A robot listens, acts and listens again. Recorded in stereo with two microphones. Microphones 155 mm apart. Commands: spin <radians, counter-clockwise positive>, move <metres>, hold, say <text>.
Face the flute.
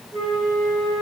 spin 0.70
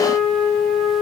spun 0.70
say Found it: a flute, straight ahead, 2 to 4 m away.